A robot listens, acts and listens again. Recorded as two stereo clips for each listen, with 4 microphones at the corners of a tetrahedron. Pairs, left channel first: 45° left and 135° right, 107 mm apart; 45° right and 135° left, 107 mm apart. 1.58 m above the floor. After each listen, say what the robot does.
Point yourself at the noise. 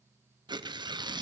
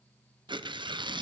Turn 180° left.
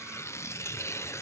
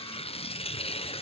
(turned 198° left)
Turn 20° right.
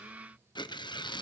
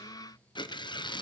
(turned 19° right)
Found it: tearing paper, straight ahead, under 1 m away.